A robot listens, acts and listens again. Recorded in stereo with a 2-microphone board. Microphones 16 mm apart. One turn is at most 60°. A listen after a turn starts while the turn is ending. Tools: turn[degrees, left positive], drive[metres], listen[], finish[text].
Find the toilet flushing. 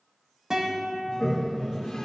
Thought: The toilet flushing: about 70° left or 110° left.
Action: turn[60]
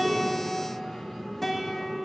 Thought: So it is at 20° left.
Action: turn[20]
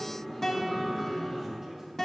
Thought: The toilet flushing is now 10° left.
Action: turn[10]
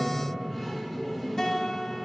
Action: finish[Found it: a toilet flushing, straight ahead.]